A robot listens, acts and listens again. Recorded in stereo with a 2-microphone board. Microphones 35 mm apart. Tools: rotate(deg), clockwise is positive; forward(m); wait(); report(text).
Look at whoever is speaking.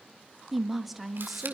rotate(-30)
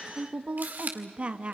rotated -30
rotate(35)
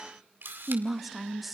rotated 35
report("Facing the woman speaking, under 1 m away.")